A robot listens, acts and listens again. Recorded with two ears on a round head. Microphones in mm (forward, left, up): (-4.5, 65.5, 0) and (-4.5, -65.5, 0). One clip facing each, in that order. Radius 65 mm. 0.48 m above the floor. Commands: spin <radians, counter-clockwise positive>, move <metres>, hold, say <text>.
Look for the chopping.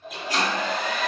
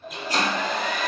spin -0.61
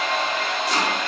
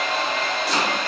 hold
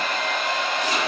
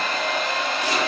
hold
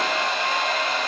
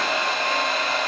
say I heard chopping, but can't make it out now. It was about straight ahead or 110° right.